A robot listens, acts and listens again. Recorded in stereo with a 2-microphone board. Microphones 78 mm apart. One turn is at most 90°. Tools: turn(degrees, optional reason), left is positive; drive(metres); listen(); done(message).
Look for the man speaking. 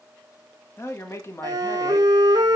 turn(degrees=35, reason="The man speaking: about 35° left or 145° left.")
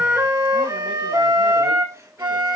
listen()
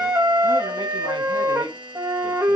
listen()
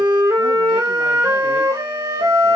done("I heard a man speaking, but can't make it out now. It was about straight ahead or 110° left.")